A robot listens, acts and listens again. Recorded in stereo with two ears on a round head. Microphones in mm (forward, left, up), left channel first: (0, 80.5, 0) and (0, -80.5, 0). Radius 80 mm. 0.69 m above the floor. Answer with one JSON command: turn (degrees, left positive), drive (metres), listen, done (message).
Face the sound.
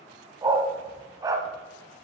{"turn": -20}
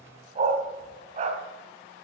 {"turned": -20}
{"turn": -140}
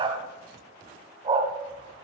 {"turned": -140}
{"turn": -25}
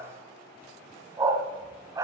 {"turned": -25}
{"turn": -20}
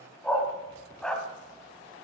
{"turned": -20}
{"done": "Facing the dog barking."}